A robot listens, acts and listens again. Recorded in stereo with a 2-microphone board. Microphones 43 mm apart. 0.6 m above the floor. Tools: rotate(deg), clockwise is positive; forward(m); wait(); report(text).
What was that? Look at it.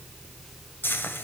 rotate(-60)
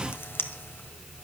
rotate(-60)
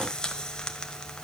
rotate(-20)
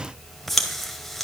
report("Found it: frying, straight ahead.")